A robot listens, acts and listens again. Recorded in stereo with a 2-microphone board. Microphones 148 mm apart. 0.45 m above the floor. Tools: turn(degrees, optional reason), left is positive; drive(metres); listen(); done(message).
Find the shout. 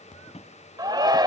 turn(degrees=-25, reason="The shout: about 25° right or 155° right.")
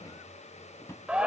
done("Found it: a shout, straight ahead.")